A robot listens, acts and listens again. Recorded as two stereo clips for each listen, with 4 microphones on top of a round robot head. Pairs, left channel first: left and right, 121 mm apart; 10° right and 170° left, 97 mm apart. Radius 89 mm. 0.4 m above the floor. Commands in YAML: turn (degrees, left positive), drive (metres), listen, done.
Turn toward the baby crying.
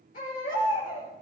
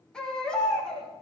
turn: 70
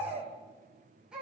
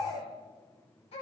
done: "Found it: a baby crying, straight ahead, over 4 m away."